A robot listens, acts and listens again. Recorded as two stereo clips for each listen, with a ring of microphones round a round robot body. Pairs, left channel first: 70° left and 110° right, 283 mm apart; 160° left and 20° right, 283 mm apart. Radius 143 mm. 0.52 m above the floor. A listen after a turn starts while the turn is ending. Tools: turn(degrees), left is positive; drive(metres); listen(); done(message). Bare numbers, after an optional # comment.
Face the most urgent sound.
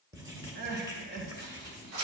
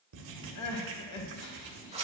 # The crying: 170° right.
turn(-170)
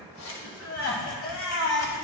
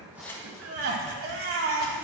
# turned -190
# The crying is now 25° left.
turn(25)
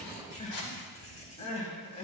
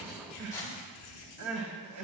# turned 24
done("Facing the crying.")